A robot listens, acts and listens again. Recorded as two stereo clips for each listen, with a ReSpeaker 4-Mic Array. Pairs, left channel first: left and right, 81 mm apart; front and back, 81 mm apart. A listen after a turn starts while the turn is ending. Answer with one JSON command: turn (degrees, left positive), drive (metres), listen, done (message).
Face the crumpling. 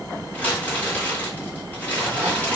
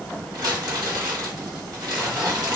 {"turn": 160}
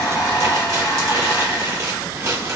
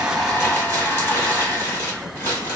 {"turn": -50}
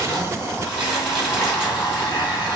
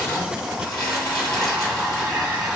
{"listen": true}
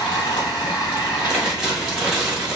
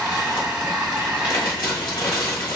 {"done": "Facing the crumpling."}